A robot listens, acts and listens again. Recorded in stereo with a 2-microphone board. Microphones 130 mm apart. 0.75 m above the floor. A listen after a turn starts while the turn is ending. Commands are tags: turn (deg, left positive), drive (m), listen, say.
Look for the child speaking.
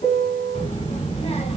<turn deg="60"/>
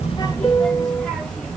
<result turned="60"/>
<turn deg="10"/>
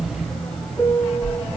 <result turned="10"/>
<turn deg="10"/>
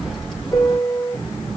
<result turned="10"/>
<say>Found it: a child speaking, straight ahead, 2 to 4 m away.</say>